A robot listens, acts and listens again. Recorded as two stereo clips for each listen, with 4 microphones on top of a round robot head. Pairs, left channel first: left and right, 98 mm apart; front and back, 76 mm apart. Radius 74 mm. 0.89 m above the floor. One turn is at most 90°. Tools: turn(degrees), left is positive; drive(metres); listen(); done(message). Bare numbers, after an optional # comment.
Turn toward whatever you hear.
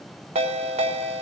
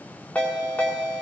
# The ringtone: 80° right.
turn(-80)
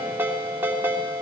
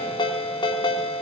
# The ringtone is now 15° right.
turn(-15)
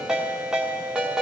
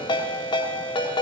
done("Found it: a ringtone, straight ahead.")